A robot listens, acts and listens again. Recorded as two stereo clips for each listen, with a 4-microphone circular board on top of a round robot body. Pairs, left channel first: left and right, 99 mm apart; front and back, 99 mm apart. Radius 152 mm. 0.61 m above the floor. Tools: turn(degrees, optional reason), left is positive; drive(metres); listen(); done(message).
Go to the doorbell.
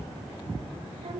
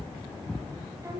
listen()
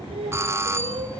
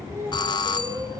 turn(degrees=-30, reason="The doorbell: 30° right.")
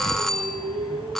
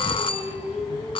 drive(metres=1.0)
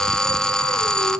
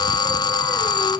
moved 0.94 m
turn(degrees=10, reason="The doorbell is now 10° left.")
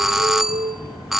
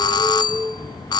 drive(metres=1.0)
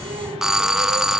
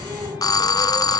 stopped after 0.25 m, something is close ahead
turn(degrees=-10, reason="The doorbell is now 10° right.")
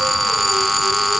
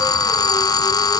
done("I am next to the doorbell.")